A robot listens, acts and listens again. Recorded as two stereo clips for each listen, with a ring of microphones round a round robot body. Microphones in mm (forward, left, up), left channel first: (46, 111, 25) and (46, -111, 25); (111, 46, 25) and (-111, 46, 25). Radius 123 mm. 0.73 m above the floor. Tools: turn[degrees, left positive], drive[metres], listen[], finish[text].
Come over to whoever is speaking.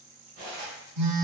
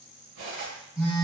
Action: listen[]
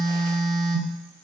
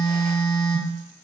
Action: listen[]
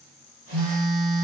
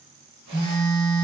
Action: finish[I can't make out anyone speaking, only cutlery clinking and a phone buzzing.]